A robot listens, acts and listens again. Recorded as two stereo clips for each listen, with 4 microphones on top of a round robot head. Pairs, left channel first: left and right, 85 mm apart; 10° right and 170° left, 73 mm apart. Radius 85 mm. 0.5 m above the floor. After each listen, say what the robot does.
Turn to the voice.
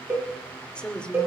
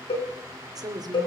Turn 165° left.
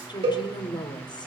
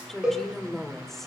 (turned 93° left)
Turn 75° left.
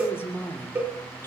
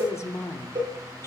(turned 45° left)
Turn 30° left.
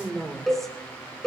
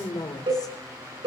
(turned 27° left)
Facing the woman speaking, 2 to 4 m away.